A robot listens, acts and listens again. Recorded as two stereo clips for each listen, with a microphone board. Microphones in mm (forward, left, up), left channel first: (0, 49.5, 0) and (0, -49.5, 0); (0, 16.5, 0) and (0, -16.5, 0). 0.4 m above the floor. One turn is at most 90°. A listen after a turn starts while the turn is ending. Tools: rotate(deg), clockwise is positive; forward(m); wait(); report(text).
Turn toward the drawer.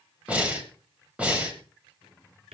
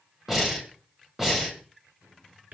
rotate(75)
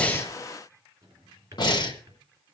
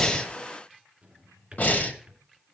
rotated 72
rotate(35)
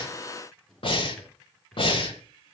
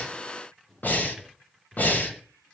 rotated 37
report("Found it: a drawer, straight ahead.")